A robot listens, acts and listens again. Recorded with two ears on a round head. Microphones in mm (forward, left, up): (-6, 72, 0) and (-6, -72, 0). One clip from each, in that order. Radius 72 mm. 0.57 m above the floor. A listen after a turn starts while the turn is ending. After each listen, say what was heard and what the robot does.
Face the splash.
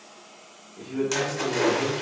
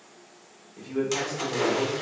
Turn 30° right.
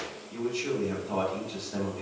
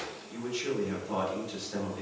Keep listening.
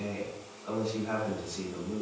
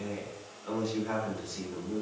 I heard a splash, but can't make it out now. It was about 25° left or 145° right.